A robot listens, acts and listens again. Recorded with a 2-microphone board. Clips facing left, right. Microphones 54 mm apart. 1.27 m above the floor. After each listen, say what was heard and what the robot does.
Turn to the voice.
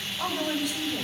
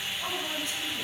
Turn 90° left.
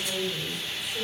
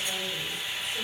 Found it: a woman speaking, straight ahead, over 4 m away.